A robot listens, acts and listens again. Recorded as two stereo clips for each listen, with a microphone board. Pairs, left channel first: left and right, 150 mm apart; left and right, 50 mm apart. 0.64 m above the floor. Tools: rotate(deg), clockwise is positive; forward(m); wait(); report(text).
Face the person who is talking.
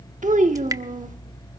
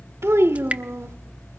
rotate(60)
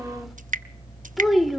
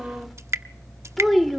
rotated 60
report("Found it: a child speaking, straight ahead, under 1 m away.")